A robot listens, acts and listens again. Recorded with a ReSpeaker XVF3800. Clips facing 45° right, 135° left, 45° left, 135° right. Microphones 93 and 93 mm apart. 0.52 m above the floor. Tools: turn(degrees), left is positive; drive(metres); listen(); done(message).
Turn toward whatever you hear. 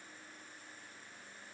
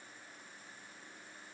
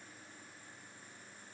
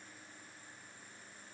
listen()
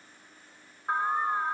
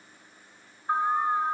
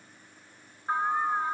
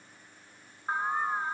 turn(degrees=-60)
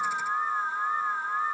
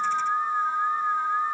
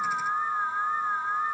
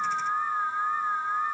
turn(degrees=-10)
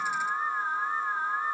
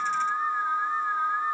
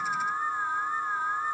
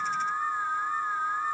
done("Found it: an alarm, straight ahead, 1 to 2 m away.")